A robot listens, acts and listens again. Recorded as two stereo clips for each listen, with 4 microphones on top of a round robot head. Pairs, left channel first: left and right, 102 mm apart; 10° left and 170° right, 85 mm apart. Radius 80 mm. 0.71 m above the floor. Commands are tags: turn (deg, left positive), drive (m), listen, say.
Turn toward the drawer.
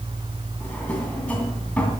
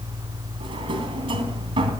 <turn deg="170"/>
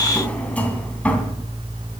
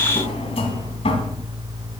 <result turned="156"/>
<turn deg="15"/>
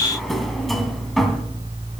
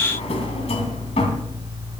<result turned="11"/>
<say>Found it: a drawer, straight ahead, 2 to 4 m away.</say>